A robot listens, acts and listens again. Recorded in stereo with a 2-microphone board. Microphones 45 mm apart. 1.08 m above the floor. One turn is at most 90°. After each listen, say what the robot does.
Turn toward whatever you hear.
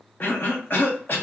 Turn 45° left.
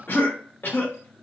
Turn 75° left.
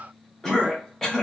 Turn 15° left.
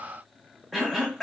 Found it: a cough, straight ahead, under 1 m away.